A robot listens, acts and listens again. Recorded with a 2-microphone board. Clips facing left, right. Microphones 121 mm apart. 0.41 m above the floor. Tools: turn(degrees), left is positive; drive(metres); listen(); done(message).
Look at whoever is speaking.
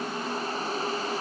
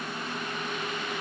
listen()
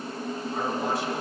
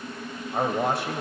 turn(degrees=-60)
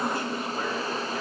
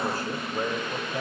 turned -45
turn(degrees=-45)
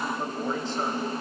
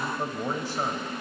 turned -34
turn(degrees=-15)
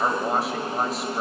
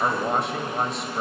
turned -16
done("Facing the man speaking, 1 to 2 m away.")